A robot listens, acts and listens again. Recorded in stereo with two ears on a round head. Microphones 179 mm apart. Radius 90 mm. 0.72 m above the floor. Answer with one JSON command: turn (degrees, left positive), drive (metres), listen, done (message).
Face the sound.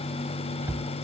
{"turn": -30}
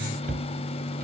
{"turn": -135}
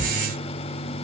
{"turn": -40}
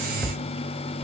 {"done": "Found it: a cupboard door, straight ahead, 1 to 2 m away."}